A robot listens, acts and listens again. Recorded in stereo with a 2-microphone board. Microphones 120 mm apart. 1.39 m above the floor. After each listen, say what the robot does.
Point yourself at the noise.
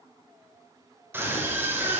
Turn 20° right.
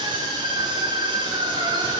Turn 140° right.
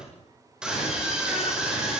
Facing the scream, over 4 m away.